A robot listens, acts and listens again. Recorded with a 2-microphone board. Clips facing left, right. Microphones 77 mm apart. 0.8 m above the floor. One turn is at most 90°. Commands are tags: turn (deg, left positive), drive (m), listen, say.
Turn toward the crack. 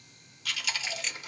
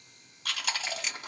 <turn deg="-30"/>
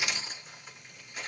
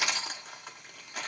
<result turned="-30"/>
<listen/>
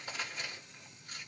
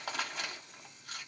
<say>I heard a crack, but can't make it out now. It was about 25° left or 145° right.</say>